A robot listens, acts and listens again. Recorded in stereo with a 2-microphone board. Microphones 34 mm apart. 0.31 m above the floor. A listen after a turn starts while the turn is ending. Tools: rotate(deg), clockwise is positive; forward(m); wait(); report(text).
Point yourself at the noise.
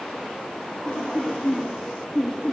rotate(-20)
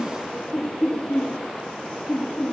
rotate(-25)
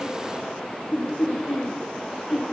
rotate(-135)
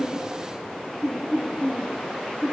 rotate(10)
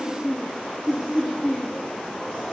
report("Facing the laughter.")